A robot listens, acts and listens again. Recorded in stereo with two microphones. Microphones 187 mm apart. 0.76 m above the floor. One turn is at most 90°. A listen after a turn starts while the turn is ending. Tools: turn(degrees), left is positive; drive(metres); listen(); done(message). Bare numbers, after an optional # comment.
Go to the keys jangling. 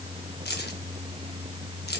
# The keys jangling: about 60° left or 120° left.
turn(60)
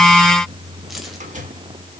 listen()
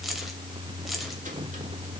drive(1.0)
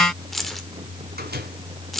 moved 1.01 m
drive(1.0)
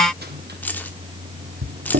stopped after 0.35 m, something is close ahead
# The keys jangling is now 10° left.
turn(10)
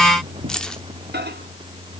done("Arrived at the keys jangling, straight ahead.")